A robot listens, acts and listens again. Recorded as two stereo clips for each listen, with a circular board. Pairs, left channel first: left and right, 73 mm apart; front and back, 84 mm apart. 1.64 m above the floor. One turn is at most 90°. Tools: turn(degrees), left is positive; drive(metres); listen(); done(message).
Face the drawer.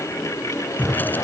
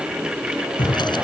turn(degrees=25)
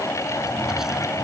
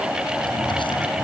listen()
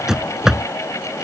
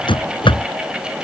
done("Facing the drawer.")